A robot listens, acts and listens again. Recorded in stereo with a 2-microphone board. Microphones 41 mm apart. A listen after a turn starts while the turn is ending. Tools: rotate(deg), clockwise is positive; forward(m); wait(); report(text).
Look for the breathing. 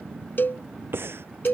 rotate(70)
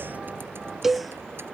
wait()
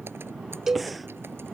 wait()
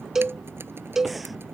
report("I heard breathing, but can't make it out now. It was about straight ahead or 40° right.")